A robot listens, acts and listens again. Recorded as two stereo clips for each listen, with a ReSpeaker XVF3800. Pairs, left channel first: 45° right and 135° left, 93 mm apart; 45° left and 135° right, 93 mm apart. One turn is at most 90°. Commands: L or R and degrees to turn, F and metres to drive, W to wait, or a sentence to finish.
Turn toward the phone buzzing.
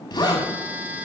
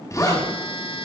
L60
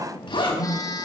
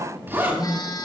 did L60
Found it: a phone buzzing, straight ahead.